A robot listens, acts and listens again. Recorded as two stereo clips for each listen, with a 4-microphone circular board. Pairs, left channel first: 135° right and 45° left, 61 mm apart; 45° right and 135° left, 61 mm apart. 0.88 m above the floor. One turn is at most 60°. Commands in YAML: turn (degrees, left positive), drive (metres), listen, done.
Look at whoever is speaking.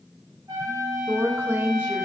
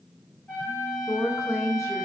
turn: -10
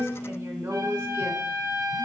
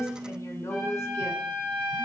done: "Found it: a woman speaking, straight ahead, 2 to 4 m away."